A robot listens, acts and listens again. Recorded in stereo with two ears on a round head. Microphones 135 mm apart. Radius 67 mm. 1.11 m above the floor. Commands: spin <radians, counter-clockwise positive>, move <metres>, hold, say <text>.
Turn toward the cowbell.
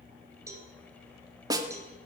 spin -0.35
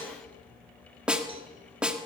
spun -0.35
hold
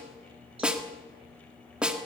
hold
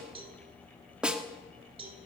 spin -2.44
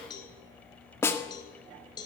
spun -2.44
spin 0.52
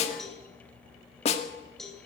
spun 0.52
say Found it: a cowbell, straight ahead.